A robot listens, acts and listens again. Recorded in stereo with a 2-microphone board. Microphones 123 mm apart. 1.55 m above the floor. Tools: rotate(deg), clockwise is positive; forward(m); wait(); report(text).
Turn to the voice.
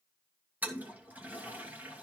wait()
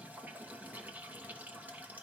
wait()
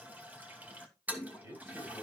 rotate(20)
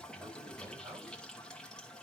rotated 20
wait()
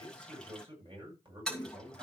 rotate(140)
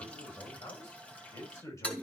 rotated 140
rotate(-25)
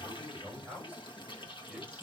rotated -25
rotate(10)
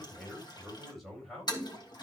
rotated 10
report("Facing the man speaking.")